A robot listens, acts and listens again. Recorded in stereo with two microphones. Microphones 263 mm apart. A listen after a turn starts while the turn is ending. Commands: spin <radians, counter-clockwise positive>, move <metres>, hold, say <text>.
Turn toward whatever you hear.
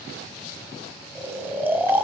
spin -0.52
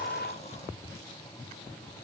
hold
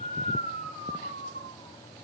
spin 0.44
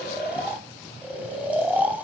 say Facing the snoring, under 1 m away.